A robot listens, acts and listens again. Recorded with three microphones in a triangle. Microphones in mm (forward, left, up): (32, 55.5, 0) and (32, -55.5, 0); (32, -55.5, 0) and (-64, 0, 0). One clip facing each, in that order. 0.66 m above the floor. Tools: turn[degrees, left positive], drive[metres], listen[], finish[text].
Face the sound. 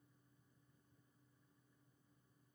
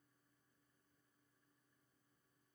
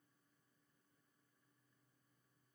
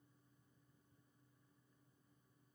Action: listen[]
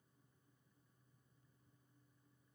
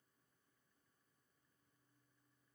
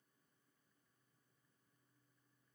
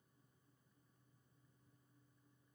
Action: listen[]
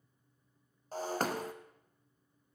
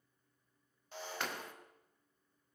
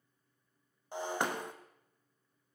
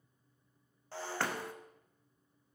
Thought: The breaking glass: 40° left.
Action: turn[40]
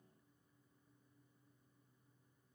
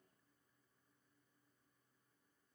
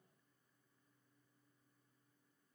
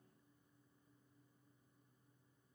Action: finish[I heard breaking glass from this way, but can't make it out now.]